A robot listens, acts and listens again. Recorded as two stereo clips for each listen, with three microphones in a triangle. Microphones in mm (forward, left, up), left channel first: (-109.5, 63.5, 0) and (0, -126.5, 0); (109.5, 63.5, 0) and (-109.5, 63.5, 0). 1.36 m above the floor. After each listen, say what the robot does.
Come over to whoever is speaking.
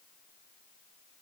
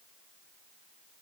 Keep listening.
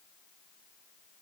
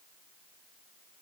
Keep listening.
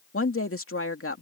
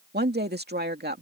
Turn 135° left.
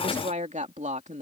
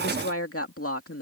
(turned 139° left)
Drive 1.0 m forward.
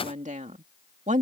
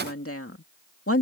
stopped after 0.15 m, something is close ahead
Blocked. The woman speaking is further on, straight ahead.